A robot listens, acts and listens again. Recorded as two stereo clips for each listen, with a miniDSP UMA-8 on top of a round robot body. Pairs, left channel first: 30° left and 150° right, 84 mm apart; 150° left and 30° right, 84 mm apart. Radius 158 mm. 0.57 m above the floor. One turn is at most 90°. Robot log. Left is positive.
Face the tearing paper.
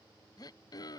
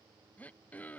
cmd idle
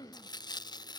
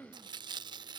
end: Found it: tearing paper, straight ahead.